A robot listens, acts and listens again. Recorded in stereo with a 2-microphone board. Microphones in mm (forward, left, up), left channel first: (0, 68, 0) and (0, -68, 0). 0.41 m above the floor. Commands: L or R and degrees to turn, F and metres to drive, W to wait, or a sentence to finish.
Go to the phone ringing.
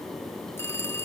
L15
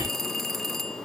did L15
F1.0
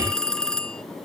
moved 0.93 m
F1.0
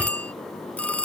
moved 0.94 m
L10
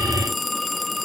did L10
F1.0
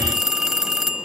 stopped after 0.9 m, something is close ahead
I am next to the phone ringing.